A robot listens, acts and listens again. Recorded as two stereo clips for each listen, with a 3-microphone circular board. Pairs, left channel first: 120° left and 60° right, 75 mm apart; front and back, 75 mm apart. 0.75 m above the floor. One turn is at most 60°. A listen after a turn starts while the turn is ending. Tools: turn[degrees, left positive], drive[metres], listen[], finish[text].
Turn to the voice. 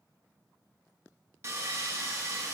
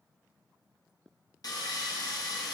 Action: listen[]
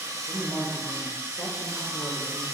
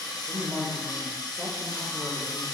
Thought: The woman speaking: 95° left.
Action: turn[60]
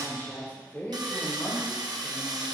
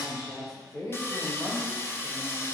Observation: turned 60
Thought: The woman speaking is now 50° left.
Action: turn[50]
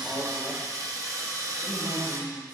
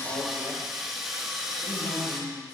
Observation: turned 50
Thought: The woman speaking is now 10° left.
Action: turn[10]
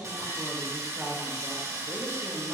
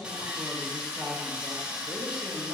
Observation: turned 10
Action: finish[Found it: a woman speaking, straight ahead, 2 to 4 m away.]